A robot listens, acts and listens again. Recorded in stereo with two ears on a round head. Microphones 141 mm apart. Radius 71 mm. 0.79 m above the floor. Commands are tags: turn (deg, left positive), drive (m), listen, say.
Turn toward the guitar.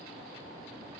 <listen/>
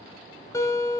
<turn deg="20"/>
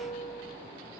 <turn deg="140"/>
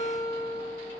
<turn deg="20"/>
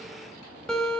<say>Facing the guitar, 1 to 2 m away.</say>